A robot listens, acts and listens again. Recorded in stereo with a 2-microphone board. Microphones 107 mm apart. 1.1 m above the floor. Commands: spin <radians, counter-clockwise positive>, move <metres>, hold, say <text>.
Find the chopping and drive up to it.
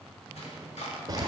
spin 1.31
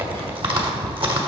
hold
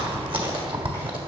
hold
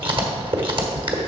say I heard chopping, but can't make it out now. It was about straight ahead or 30° left. I did not reach it.